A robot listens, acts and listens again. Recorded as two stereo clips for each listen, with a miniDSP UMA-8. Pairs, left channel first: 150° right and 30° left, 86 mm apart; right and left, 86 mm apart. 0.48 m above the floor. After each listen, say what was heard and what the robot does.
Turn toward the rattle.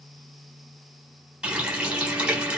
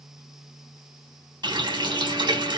Keep listening.
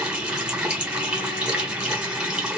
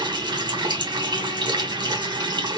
Keep listening.
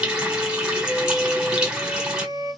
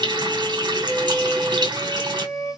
I can't make out a rattle to turn to.